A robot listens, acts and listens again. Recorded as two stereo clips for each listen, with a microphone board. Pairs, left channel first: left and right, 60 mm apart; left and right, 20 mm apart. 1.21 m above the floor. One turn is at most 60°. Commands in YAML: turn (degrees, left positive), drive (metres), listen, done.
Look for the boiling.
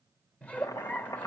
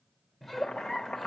turn: 60
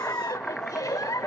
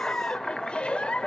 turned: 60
done: "Facing the boiling."